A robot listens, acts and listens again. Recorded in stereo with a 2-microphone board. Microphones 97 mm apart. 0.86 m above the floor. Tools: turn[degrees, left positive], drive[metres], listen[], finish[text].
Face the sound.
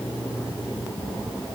Action: listen[]
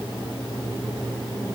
Action: listen[]
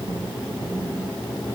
Action: finish[I can't make out anything to turn to.]